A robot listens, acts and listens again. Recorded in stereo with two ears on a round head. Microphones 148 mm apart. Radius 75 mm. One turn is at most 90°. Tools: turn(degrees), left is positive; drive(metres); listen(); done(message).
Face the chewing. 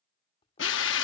turn(degrees=35)
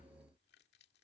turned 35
turn(degrees=90)
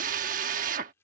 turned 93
turn(degrees=15)
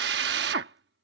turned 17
listen()
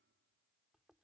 done("Found it: chewing, straight ahead.")